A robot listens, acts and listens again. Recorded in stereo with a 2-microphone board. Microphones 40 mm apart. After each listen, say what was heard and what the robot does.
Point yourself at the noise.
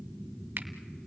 The finger snap: about 55° right or 125° right. Turn 55° right.
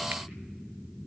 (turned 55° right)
Keep listening.
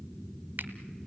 So it is at 65° right. Turn 65° right.
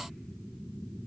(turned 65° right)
Keep listening.
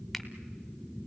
Keep listening.
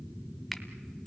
Found it: a finger snap, straight ahead, 1 to 2 m away.